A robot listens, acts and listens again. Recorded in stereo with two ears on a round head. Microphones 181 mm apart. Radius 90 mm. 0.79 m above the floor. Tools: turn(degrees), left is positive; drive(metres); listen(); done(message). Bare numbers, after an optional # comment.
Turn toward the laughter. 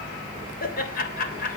# The laughter: about 45° left or 135° left.
turn(45)
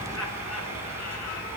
listen()
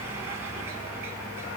listen()
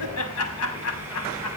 # So it is at 95° left.
turn(95)
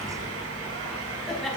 done("Facing the laughter, over 4 m away.")